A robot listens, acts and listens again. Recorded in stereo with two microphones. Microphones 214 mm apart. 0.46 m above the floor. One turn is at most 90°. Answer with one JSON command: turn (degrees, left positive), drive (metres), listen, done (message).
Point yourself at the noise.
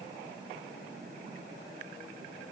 {"listen": true}
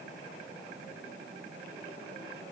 {"listen": true}
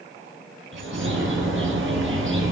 {"turn": -70}
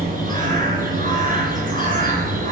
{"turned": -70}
{"turn": -40}
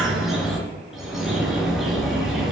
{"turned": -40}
{"done": "Facing the bird, 2 to 4 m away."}